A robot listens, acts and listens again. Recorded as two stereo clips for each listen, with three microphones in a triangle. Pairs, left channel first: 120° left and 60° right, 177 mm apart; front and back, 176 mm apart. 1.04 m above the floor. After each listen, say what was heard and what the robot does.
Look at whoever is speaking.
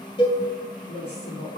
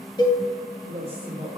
The woman speaking: 115° left. Turn 115° left.
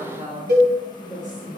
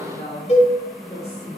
The woman speaking is now 20° right. Turn 20° right.
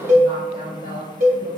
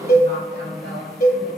Found it: a woman speaking, straight ahead, 2 to 4 m away.